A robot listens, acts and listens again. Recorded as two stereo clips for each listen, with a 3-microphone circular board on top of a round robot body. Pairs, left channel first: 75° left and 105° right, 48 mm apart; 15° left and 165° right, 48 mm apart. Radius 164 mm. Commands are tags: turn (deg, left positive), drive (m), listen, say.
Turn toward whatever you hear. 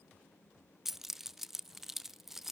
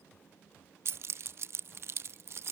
<turn deg="170"/>
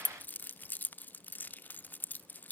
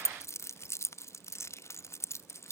<turn deg="25"/>
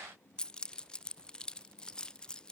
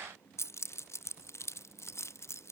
<say>Facing the keys jangling, under 1 m away.</say>